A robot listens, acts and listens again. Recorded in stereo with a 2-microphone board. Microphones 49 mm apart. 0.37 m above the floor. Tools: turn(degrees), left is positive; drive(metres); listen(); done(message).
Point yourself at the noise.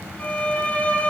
turn(degrees=25)
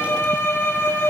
turn(degrees=125)
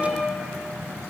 turn(degrees=10)
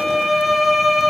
done("Facing the violin, 1 to 2 m away.")